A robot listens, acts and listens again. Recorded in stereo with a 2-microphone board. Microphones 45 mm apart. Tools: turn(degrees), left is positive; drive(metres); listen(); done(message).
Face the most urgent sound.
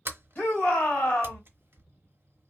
turn(degrees=45)
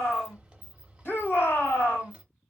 turn(degrees=75)
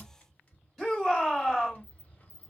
done("Found it: a shout, straight ahead, 1 to 2 m away.")